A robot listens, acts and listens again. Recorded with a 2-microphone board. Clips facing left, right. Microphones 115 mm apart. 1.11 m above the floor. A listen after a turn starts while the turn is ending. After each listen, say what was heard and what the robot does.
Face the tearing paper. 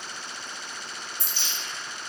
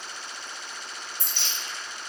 The tearing paper: about 60° right or 120° right. Turn 60° right.
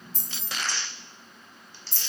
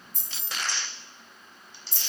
So it is at 20° right. Turn 20° right.
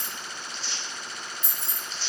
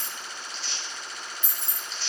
Found it: tearing paper, straight ahead.